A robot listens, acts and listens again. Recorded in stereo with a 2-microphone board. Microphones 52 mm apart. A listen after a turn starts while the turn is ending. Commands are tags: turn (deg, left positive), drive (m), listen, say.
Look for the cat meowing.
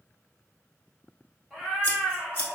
<turn deg="-30"/>
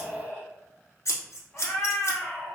<turn deg="25"/>
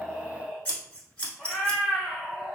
<turn deg="-10"/>
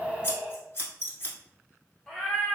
<say>Found it: a cat meowing, straight ahead.</say>